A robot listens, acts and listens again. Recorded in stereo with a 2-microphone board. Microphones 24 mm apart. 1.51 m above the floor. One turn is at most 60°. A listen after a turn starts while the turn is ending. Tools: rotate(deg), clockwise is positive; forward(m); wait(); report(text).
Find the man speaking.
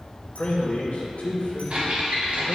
rotate(-60)
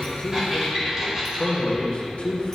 rotate(-50)
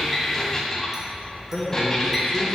rotate(-10)
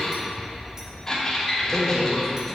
report("Facing the man speaking, 1 to 2 m away.")